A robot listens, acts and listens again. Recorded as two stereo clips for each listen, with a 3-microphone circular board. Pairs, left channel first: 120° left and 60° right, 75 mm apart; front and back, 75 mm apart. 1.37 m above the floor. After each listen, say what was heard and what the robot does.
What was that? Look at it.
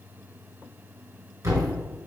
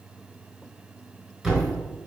The thud: 95° right. Turn 95° right.
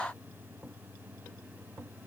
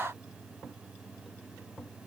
I heard a thud from this way, but can't make it out now.